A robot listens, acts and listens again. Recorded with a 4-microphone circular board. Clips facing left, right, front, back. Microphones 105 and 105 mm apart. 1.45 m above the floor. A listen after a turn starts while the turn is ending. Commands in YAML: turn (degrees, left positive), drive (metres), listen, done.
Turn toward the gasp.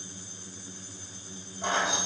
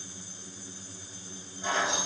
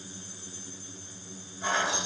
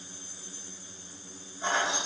listen: true
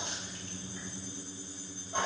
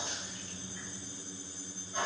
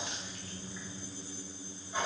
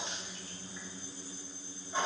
listen: true
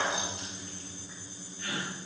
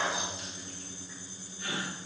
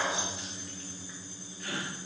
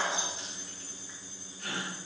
turn: -160
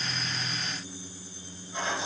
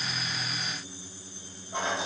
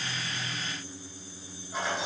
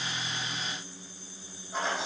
done: "I heard a gasp from this way, but can't make it out now."